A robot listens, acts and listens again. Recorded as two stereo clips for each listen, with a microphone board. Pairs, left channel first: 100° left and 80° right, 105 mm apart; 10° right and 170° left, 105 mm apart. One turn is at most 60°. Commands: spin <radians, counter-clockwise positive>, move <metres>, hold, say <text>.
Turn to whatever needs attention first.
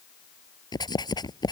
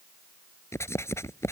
hold
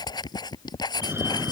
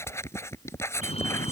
spin -0.17
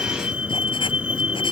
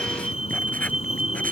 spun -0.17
say Found it: a fire alarm, straight ahead.